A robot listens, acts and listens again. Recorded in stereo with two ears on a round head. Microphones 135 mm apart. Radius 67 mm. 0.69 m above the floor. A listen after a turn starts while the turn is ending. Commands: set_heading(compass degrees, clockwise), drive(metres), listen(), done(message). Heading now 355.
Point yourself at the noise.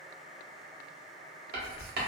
set_heading(60)
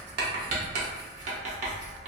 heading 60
set_heading(110)
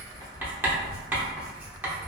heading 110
set_heading(120)
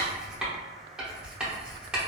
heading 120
done("Found it: writing, straight ahead.")